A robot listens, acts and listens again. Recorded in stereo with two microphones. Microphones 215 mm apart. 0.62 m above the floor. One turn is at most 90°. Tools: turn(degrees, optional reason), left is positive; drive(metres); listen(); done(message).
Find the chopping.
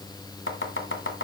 turn(degrees=65, reason="The chopping: about 65° left or 115° left.")
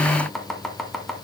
done("Found it: chopping, straight ahead.")